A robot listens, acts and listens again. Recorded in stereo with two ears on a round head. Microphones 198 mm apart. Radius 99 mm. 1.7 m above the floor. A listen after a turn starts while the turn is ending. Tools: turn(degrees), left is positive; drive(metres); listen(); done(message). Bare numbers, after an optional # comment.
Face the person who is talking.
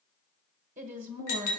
# The woman speaking: about 35° right or 145° right.
turn(-35)
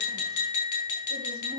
listen()
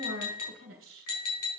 # So it is at 105° right.
turn(-105)
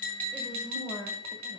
# The woman speaking is now 15° left.
turn(15)
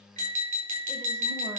listen()
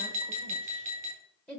done("Facing the woman speaking, 1 to 2 m away.")